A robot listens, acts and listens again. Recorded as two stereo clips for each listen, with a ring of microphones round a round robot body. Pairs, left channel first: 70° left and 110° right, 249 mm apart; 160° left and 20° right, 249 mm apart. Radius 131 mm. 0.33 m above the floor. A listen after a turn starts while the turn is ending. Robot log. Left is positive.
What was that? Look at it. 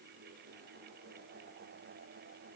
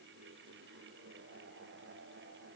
cmd idle
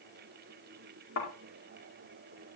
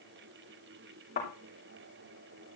note: The thud: 100° left.
cmd yaw +100
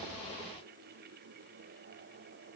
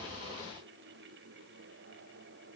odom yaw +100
end: Facing where the thud came from. I can't hear it now.